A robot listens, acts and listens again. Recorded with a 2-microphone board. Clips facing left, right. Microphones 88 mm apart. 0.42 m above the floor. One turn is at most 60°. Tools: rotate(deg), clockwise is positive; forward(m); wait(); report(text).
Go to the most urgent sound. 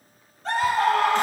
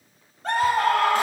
rotate(55)
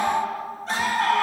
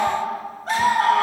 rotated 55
rotate(60)
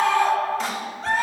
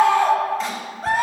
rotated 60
rotate(10)
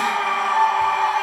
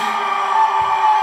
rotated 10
forward(1.0)
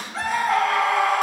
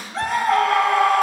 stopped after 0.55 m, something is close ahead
report("Something is in my way. I am facing the scream but have not reached it.")